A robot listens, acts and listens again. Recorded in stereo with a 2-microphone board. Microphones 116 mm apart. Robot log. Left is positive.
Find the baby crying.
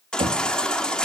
cmd yaw +30
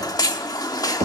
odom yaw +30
note: So it is at 145° left.
cmd yaw +145
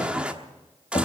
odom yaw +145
note: The baby crying is now 10° right.
cmd yaw -10
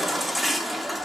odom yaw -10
end: Found it: a baby crying, straight ahead.